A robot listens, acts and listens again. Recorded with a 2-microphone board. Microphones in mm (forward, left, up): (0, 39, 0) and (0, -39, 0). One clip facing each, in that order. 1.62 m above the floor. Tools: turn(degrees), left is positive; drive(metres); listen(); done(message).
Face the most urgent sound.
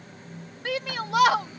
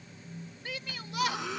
turn(degrees=90)
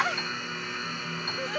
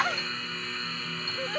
done("Found it: a shout, straight ahead.")